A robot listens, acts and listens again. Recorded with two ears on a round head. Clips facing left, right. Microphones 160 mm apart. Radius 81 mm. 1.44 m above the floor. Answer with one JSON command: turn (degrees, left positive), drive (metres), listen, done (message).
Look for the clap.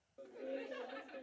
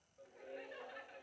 {"listen": true}
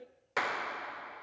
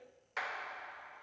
{"turn": 60}
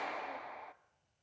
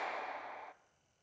{"done": "Found it: a clap, straight ahead."}